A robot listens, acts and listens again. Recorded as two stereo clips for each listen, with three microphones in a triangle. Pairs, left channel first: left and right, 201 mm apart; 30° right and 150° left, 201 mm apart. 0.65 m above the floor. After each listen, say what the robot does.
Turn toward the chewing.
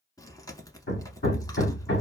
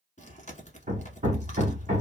Turn 15° left.
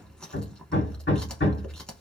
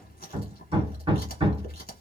Facing the chewing, 1 to 2 m away.